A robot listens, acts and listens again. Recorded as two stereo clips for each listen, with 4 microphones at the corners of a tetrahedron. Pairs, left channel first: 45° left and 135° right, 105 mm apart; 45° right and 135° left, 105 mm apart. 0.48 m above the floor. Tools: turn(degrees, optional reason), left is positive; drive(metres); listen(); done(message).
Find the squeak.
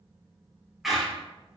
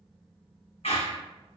turn(degrees=-50, reason="The squeak: 50° right.")
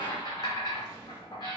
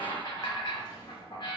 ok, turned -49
done("Facing the squeak, 1 to 2 m away.")